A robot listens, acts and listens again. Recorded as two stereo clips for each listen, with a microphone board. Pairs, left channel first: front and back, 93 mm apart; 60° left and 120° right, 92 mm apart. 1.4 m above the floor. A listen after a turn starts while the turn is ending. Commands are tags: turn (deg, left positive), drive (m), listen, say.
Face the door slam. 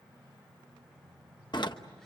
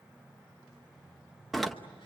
<turn deg="-30"/>
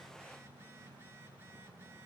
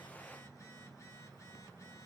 <say>I heard a door slam from this way, but can't make it out now.</say>